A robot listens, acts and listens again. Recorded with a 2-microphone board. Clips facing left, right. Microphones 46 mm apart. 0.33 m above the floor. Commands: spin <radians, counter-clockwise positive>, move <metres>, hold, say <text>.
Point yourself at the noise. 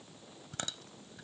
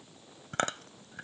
spin -0.96
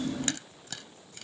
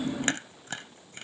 spin -0.79
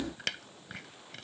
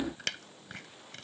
say Facing the chewing.